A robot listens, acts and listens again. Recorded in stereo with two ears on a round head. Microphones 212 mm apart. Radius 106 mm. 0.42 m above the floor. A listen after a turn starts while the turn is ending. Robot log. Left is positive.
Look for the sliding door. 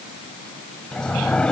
cmd yaw +30
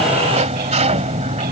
note: So it is at 30° right.
cmd yaw -30
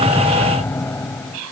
note: The sliding door is now 10° left.
cmd yaw +10
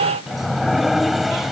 end: Found it: a sliding door, straight ahead.